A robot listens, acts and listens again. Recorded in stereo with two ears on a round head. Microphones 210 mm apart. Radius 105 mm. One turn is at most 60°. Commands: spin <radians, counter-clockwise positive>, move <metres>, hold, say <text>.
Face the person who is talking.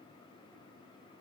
hold
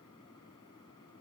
hold
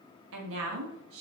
spin -1.05
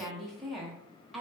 say Found it: a woman speaking, straight ahead.